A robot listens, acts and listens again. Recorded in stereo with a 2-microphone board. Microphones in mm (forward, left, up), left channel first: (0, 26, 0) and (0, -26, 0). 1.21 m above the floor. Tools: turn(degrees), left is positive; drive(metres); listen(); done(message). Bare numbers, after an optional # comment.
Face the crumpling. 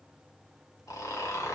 listen()
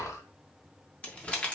# The crumpling: about 20° left or 160° left.
turn(20)
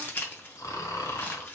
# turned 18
# So it is at 140° left.
turn(140)
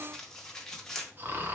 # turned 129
# The crumpling is now 10° left.
turn(10)
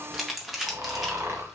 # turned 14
done("Found it: crumpling, straight ahead, 1 to 2 m away.")